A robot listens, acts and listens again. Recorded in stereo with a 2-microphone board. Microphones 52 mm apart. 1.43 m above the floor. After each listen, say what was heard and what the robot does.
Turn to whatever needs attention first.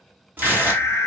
The alarm: about 70° left or 110° left. Turn 70° left.
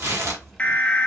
So it is at 25° left. Turn 25° left.
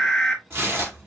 Facing the alarm, under 1 m away.